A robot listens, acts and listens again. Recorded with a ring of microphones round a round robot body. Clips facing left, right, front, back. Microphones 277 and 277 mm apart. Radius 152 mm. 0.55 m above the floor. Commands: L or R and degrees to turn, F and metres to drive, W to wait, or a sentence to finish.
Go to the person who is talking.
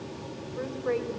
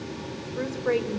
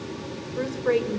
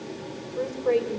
R60
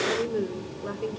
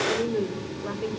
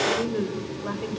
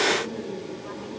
F1.0
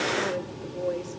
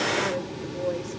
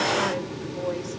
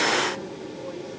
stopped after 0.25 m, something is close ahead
Blocked. The woman speaking is further on, straight ahead.